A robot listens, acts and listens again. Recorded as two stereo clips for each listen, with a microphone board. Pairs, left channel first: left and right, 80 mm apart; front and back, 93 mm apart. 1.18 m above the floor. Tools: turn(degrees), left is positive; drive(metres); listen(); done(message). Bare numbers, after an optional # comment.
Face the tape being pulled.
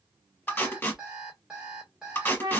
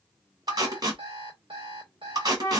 # The tape being pulled: 150° left.
turn(150)
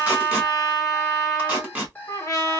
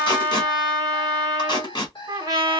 # The tape being pulled is now 15° right.
turn(-15)
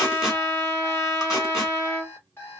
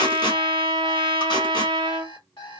listen()
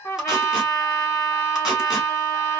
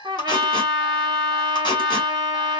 listen()
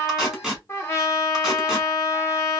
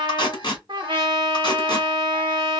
done("Found it: tape being pulled, straight ahead.")